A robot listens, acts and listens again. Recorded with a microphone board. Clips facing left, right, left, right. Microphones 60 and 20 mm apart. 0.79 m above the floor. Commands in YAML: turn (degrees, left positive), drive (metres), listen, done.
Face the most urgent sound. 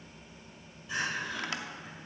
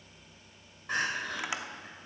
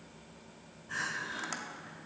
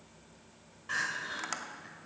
turn: -55
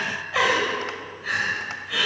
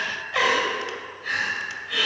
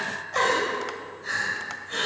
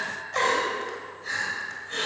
done: "Found it: crying, straight ahead, 2 to 4 m away."